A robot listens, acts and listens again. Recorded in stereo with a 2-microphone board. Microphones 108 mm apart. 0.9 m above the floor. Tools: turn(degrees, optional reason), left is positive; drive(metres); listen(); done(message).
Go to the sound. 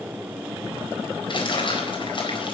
turn(degrees=50, reason="The crumpling: about 50° left or 130° left.")
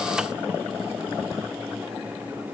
listen()
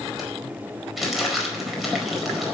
drive(metres=1.0)
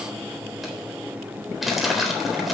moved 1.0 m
drive(metres=1.0)
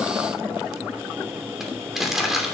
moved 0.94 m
drive(metres=1.0)
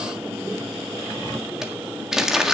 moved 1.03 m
drive(metres=1.0)
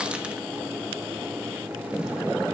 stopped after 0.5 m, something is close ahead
listen()
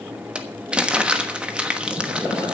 turn(degrees=-10, reason="The crumpling is now 10° right.")
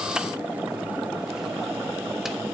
listen()
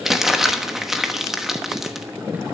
done("Arrived at the crumpling, straight ahead.")